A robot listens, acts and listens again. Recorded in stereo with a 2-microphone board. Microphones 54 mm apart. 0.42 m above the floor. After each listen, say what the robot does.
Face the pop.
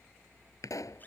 Turn 90° left.
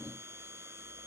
Facing where the pop came from. I can't hear it now.